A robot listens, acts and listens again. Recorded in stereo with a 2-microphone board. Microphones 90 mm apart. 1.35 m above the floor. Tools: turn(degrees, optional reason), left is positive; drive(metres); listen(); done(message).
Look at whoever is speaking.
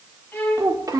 turn(degrees=-40, reason="The child speaking: about 40° right or 140° right.")
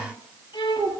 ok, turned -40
turn(degrees=-110, reason="So it is at 110° right.")
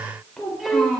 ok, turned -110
done("Facing the child speaking.")